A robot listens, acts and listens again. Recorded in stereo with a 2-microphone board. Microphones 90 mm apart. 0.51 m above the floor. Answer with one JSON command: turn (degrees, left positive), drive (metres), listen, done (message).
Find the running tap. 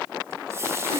{"turn": -30}
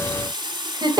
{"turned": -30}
{"turn": -120}
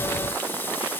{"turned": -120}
{"listen": true}
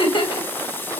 {"turn": 25}
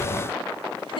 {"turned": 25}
{"listen": true}
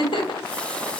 {"listen": true}
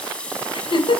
{"turn": 15}
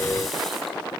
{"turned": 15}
{"listen": true}
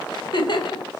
{"listen": true}
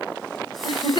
{"done": "I heard a running tap from this way, but can't make it out now."}